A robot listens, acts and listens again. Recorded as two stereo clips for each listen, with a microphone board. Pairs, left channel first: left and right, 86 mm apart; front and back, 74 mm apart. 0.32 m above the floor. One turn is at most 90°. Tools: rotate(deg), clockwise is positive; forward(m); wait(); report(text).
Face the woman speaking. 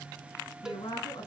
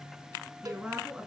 rotate(-90)
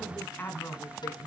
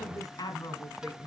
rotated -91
rotate(-30)
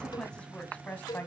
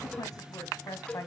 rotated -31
rotate(-25)
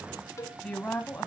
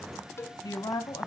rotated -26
rotate(-20)
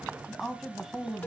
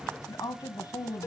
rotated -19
report("Found it: a woman speaking, straight ahead.")